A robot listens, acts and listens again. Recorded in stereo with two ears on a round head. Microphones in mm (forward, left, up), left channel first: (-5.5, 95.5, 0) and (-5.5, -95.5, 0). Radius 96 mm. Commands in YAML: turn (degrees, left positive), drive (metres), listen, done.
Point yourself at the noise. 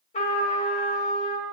turn: 30
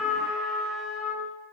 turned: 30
done: "Found it: a trumpet, straight ahead, 1 to 2 m away."